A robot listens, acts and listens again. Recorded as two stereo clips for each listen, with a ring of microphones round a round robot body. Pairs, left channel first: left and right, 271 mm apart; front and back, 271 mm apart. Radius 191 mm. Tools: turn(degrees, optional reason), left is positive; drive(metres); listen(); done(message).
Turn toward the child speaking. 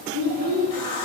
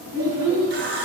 turn(degrees=-135, reason="The child speaking: 135° right.")
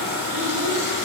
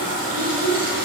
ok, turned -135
turn(degrees=-60, reason="The child speaking is now 60° right.")
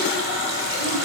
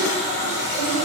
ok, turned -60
listen()
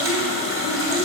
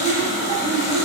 listen()
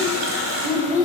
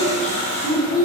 turn(degrees=-25, reason="The child speaking is now 25° right.")
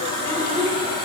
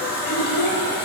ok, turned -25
done("Found it: a child speaking, straight ahead, 2 to 4 m away.")